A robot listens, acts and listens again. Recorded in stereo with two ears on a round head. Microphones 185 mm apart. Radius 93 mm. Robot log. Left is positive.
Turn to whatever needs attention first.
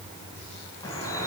cmd idle
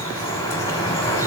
cmd idle
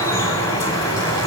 end: I can't make out anything urgent, only dripping.